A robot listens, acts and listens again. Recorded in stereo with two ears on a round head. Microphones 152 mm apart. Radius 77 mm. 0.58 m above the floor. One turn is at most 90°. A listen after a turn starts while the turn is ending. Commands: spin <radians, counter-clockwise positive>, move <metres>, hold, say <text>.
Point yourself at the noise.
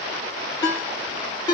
spin 0.44
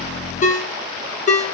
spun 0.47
spin 1.57
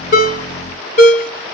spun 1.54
spin 0.79
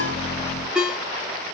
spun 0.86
say Facing the ringtone, under 1 m away.